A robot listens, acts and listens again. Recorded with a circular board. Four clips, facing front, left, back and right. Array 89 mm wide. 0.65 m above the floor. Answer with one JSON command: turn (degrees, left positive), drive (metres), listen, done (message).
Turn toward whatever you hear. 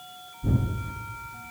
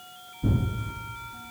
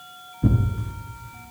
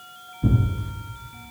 {"turn": -175}
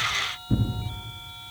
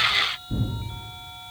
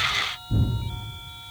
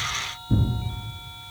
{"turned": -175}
{"turn": -30}
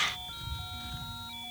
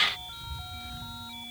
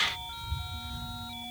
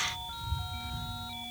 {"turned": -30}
{"listen": true}
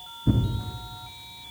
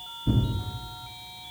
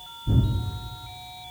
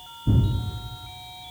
{"done": "Facing the tearing paper."}